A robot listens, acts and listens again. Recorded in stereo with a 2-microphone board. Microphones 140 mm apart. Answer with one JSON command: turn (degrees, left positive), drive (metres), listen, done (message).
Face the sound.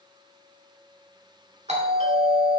{"turn": -60}
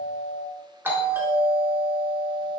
{"turn": -20}
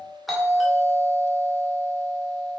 {"done": "Found it: a doorbell, straight ahead, 1 to 2 m away."}